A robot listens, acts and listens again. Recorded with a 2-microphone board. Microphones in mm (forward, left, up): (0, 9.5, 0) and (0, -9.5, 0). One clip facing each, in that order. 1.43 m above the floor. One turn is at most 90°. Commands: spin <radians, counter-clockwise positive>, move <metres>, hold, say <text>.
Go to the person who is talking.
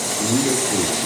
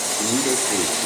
spin -1.05
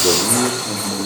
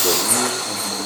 hold
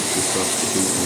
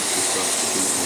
hold
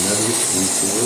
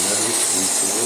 move 1.0
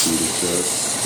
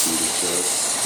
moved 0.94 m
hold
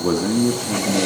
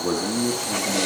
move 1.0
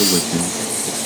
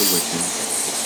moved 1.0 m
move 1.0
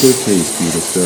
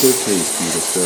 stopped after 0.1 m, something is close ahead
say I am next to the man speaking.